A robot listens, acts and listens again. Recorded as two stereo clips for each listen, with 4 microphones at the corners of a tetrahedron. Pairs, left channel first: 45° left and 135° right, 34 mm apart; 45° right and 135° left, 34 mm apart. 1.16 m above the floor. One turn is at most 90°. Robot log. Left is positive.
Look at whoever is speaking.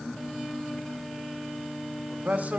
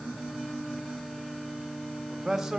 note: The man speaking: 150° right.
cmd yaw -90
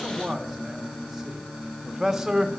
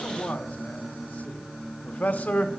note: The man speaking is now 60° right.
cmd yaw -60
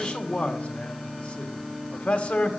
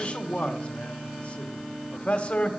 end: Facing the man speaking.